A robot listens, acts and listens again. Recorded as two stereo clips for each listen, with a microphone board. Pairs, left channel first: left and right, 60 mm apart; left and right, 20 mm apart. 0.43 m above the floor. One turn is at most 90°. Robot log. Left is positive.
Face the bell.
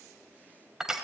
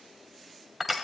cmd idle
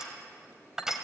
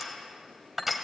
cmd idle
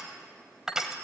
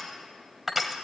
end: I can't make out a bell, only crushing.